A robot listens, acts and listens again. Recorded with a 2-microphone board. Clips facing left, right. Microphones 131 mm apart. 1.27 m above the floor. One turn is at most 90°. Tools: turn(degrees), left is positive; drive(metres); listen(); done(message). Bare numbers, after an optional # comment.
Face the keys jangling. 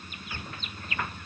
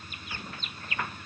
listen()
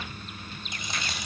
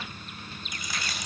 # The keys jangling: about 25° left or 155° left.
turn(25)
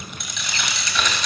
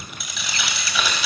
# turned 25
done("Found it: keys jangling, straight ahead, over 4 m away.")